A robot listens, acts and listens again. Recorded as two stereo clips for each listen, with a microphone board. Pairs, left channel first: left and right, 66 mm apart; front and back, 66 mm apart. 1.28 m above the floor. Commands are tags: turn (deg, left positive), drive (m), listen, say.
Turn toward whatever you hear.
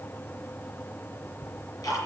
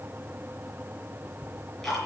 <turn deg="85"/>
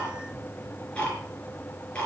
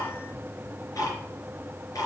<turn deg="20"/>
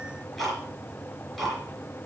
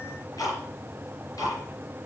<say>Facing the ticking.</say>